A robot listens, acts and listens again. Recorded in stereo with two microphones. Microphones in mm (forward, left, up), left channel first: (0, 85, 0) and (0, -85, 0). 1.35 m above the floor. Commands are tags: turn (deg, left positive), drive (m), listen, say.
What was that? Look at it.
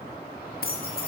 <turn deg="65"/>
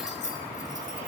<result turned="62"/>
<turn deg="50"/>
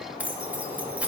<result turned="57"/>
<turn deg="-10"/>
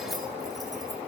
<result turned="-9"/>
<listen/>
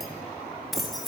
<say>Found it: keys jangling, straight ahead, 1 to 2 m away.</say>